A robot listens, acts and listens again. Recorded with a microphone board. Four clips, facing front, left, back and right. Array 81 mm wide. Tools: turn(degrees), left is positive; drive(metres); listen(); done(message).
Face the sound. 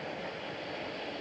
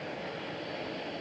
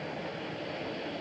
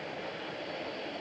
listen()
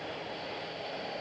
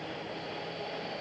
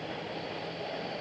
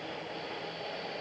listen()
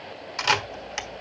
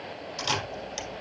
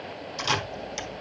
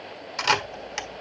turn(degrees=-40)
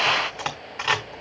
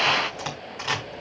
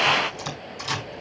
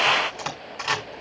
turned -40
done("Found it: a camera shutter, straight ahead.")